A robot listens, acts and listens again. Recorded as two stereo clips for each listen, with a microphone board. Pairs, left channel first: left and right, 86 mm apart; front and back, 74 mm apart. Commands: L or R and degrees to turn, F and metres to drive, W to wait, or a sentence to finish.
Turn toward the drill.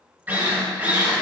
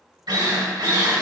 R160
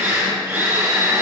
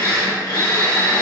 R30
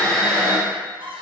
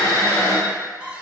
L10
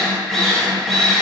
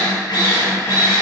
Found it: a drill, straight ahead, 2 to 4 m away.